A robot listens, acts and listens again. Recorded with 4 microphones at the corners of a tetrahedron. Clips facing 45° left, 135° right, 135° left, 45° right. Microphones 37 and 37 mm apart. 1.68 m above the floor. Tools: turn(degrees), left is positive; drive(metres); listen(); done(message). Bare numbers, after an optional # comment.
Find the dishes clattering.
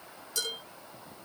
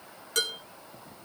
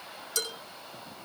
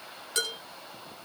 # The dishes clattering: 100° right.
turn(-100)
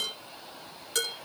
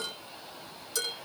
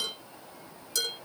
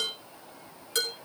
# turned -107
done("Facing the dishes clattering, over 4 m away.")